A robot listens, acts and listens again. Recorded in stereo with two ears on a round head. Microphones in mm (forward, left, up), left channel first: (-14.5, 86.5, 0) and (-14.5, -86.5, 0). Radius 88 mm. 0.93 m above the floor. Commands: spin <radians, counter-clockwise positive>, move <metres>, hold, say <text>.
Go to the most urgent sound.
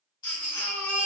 spin 0.35
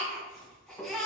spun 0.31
move 1.0
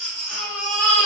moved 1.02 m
move 1.0
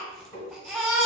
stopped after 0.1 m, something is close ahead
say Arrived at the baby crying, straight ahead.